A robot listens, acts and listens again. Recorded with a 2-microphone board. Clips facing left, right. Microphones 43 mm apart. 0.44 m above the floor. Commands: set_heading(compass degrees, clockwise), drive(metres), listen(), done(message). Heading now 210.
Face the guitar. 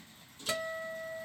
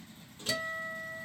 set_heading(180)
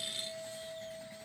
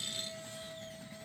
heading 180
done("Facing the guitar, 1 to 2 m away.")